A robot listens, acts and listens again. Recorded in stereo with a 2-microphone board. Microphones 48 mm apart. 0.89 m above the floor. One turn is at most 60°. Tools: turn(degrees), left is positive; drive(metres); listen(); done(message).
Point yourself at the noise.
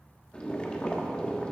turn(degrees=20)
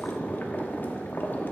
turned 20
turn(degrees=60)
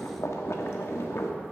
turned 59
turn(degrees=60)
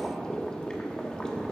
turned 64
turn(degrees=20)
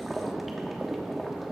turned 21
done("Found it: boiling, straight ahead.")